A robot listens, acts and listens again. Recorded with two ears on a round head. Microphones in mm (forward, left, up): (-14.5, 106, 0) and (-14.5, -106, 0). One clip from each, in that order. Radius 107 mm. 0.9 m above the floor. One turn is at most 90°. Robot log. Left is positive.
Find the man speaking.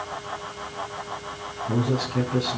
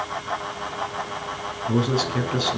note: The man speaking: about 65° right or 115° right.
cmd yaw -65
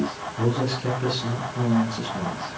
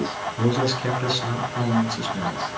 note: So it is at 40° right.
cmd yaw -40
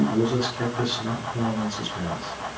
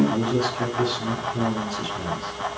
end: Found it: a man speaking, straight ahead, over 4 m away.